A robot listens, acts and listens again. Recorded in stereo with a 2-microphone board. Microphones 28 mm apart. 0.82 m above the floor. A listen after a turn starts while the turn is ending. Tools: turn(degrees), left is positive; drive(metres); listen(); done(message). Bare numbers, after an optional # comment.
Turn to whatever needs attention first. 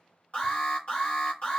# The alarm: about 50° left or 130° left.
turn(50)
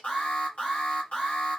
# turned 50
# So it is at 65° left.
turn(65)
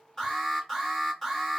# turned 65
done("Found it: an alarm, straight ahead, 1 to 2 m away.")